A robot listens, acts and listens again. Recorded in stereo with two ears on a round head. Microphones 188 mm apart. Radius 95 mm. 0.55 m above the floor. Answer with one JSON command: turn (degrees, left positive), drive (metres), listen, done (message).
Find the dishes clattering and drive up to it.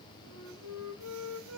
{"listen": true}
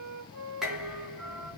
{"turn": -30}
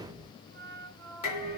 {"turn": 30}
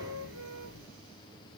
{"drive": 1.0}
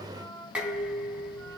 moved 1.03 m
{"drive": 1.0}
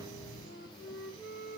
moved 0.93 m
{"turn": -15}
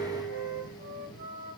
{"drive": 1.0}
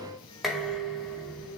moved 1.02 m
{"drive": 1.0}
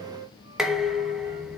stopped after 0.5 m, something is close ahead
{"done": "I am next to the dishes clattering."}